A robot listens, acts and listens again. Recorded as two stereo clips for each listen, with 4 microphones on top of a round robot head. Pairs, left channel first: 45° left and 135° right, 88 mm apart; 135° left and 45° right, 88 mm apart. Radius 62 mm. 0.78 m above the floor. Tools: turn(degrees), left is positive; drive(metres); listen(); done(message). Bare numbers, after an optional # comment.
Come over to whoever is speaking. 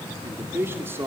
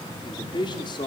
# The man speaking: 165° left.
turn(165)
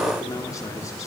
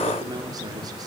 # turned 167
listen()
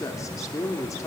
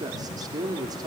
drive(1.0)
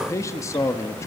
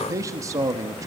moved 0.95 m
drive(1.0)
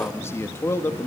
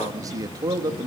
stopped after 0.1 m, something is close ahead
# The man speaking is now 10° right.
turn(-10)
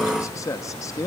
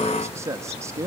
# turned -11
done("I am next to the man speaking.")